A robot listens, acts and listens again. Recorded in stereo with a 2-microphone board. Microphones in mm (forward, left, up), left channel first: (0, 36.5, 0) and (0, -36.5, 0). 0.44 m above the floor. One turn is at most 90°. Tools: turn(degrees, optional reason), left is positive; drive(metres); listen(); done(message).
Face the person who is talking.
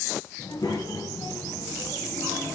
turn(degrees=90)
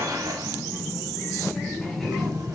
turn(degrees=10, reason="So it is at 10° left.")
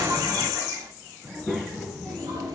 done("Found it: a child speaking, straight ahead.")